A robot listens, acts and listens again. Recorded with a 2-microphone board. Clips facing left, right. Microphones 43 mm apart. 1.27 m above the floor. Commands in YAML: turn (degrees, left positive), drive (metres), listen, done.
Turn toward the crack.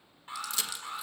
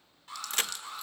turn: -55
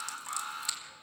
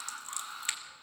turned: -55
listen: true
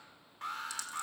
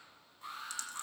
done: "I heard a crack, but can't make it out now. It was about straight ahead or 70° right."